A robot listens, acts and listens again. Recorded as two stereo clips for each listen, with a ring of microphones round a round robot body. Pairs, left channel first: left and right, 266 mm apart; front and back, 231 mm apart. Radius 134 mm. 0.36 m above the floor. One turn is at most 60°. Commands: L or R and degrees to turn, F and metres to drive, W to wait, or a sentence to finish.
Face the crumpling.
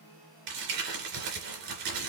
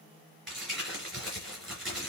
R60
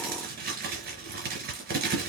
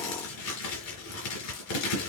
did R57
R35
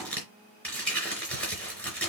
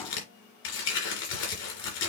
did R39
Found it: crumpling, straight ahead, 2 to 4 m away.